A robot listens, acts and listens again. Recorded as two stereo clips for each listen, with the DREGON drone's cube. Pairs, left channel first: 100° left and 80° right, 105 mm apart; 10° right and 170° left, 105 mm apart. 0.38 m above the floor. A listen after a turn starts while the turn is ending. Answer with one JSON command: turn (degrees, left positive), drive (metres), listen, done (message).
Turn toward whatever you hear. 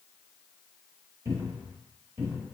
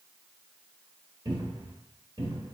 {"turn": -140}
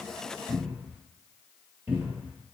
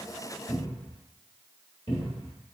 {"turn": -10}
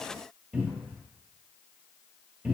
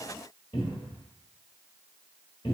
{"done": "Found it: a cupboard door, straight ahead, 1 to 2 m away."}